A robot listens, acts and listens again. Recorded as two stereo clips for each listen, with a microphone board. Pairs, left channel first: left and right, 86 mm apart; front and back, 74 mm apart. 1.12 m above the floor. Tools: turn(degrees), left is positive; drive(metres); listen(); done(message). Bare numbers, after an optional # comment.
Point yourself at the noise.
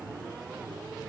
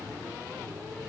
listen()
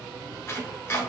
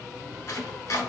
# The chopping: 35° left.
turn(35)
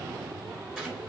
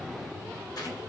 # The chopping is now 10° right.
turn(-10)
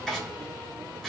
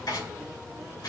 done("Found it: chopping, straight ahead.")